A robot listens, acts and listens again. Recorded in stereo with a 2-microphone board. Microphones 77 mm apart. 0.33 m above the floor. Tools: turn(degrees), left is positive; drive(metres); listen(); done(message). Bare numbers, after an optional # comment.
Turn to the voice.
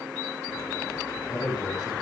# The man speaking: about 65° left or 115° left.
turn(65)
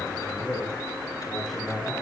done("Found it: a man speaking, straight ahead.")